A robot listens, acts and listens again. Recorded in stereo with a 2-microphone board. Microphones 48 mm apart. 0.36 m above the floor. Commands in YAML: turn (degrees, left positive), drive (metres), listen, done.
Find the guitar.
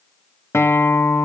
turn: 65
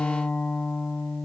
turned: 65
turn: 30
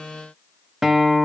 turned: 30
turn: -10
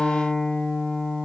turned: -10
done: "Found it: a guitar, straight ahead."